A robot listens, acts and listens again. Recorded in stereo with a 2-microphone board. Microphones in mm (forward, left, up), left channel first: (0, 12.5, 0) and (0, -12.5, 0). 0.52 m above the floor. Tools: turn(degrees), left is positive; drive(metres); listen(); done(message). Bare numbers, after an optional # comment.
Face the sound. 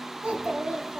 # The child speaking: about 60° right or 120° right.
turn(-60)
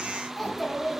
# So it is at 15° left.
turn(15)
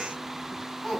# The child speaking is now 10° left.
turn(10)
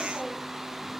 listen()
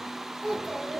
done("Facing the child speaking.")